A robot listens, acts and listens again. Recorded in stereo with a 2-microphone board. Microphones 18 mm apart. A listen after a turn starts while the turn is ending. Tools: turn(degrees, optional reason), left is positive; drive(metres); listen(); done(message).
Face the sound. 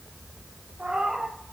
turn(degrees=-90)
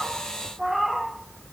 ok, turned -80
done("Facing the cat meowing.")